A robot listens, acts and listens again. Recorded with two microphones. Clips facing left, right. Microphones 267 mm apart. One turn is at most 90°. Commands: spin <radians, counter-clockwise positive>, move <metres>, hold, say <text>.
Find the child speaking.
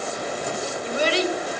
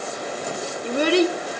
spin -1.05
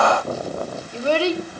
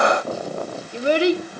spin -0.35
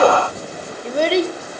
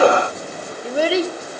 say Facing the child speaking, 1 to 2 m away.